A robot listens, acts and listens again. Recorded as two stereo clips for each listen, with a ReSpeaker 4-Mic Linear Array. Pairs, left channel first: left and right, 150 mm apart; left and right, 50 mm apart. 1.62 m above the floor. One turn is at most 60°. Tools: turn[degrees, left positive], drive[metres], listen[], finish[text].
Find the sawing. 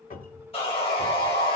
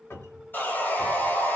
Thought: The sawing: about 45° left or 135° left.
Action: turn[45]
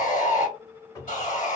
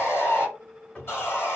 Thought: So it is at 85° left.
Action: turn[60]
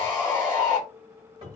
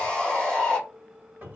Thought: The sawing is now 20° left.
Action: turn[20]
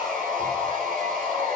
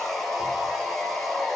Action: finish[Facing the sawing, 1 to 2 m away.]